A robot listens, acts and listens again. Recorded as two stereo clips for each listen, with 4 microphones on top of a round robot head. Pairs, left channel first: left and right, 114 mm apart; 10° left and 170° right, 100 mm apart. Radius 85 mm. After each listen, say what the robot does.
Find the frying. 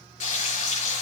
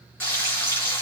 Turn 80° left.
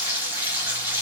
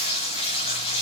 Turn 15° right.
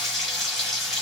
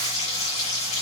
Facing the frying, over 4 m away.